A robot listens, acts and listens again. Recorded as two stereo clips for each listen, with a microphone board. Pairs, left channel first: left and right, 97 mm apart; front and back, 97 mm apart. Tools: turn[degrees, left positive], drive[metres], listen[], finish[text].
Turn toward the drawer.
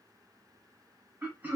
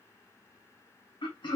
Action: listen[]
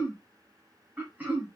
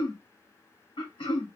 Action: listen[]
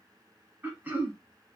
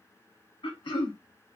Action: finish[I can't make out a drawer, only throat clearing.]